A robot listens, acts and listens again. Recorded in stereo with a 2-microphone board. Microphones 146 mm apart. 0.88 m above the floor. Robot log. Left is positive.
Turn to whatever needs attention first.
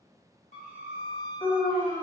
note: The alarm: about 30° left or 150° left.
cmd yaw +30
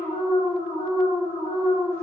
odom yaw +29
note: So it is at 120° left.
cmd yaw +120
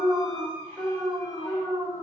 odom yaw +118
end: Facing the alarm, 1 to 2 m away.